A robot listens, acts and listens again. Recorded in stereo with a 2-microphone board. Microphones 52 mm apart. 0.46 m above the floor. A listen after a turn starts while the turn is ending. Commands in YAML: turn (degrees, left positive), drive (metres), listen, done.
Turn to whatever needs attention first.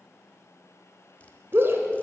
turn: -50
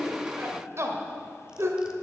turn: -75
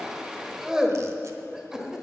turn: -10
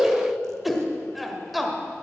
done: "Facing the shout."